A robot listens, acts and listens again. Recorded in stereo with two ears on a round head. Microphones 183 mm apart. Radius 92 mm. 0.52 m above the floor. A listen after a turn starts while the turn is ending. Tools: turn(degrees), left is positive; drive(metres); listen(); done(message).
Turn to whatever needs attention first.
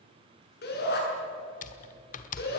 turn(degrees=55)
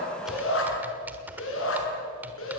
turn(degrees=70)
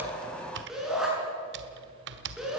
done("Found it: a shout, straight ahead, over 4 m away.")